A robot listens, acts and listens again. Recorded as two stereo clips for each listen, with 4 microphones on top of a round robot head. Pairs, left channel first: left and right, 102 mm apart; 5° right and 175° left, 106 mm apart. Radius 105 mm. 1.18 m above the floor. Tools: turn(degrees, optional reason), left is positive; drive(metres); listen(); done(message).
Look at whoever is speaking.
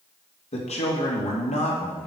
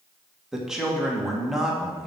turn(degrees=90, reason="The man speaking: 90° left.")
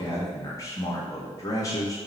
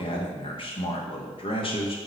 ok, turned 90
turn(degrees=30, reason="The man speaking is now 30° left.")
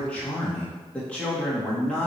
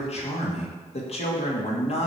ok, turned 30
turn(degrees=10, reason="The man speaking is now 10° left.")
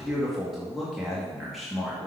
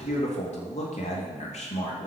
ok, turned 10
done("Found it: a man speaking, straight ahead.")